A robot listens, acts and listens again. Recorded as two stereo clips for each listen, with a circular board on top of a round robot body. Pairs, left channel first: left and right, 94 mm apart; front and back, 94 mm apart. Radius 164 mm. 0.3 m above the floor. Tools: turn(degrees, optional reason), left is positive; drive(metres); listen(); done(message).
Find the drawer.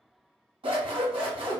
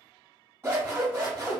listen()
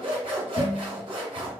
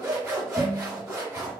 listen()
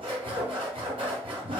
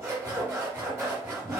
done("I can't make out a drawer, only scissors.")